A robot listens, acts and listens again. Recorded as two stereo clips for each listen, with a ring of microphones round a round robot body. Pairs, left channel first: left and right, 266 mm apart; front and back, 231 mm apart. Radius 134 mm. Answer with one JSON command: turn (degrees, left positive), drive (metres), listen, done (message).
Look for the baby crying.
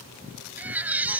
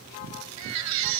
{"turn": -175}
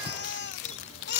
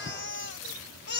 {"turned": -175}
{"turn": 40}
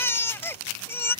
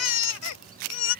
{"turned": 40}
{"turn": 10}
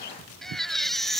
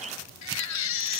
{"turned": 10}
{"done": "Facing the baby crying."}